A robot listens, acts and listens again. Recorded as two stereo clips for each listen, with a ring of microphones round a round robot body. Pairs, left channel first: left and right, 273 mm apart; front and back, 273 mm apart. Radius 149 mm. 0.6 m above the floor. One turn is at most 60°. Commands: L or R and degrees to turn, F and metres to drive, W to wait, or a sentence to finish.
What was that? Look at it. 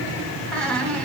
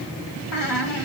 Found it: a squeak, straight ahead, 1 to 2 m away.